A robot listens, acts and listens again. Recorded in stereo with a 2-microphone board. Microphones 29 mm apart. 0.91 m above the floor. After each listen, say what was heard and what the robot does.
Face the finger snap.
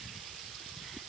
Keep listening.
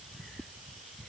Keep listening.
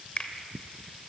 The finger snap: about 40° left or 140° left. Turn 40° left.
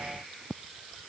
Keep listening.
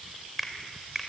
Found it: a finger snap, straight ahead.